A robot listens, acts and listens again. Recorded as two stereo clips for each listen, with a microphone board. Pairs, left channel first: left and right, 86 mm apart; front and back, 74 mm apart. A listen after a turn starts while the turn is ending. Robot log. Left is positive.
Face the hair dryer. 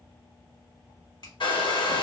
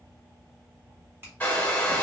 note: The hair dryer: 70° left.
cmd yaw +70
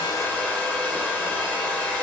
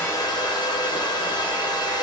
note: The hair dryer is now 15° left.
cmd yaw +15
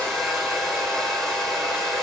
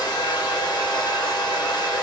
end: Facing the hair dryer, 1 to 2 m away.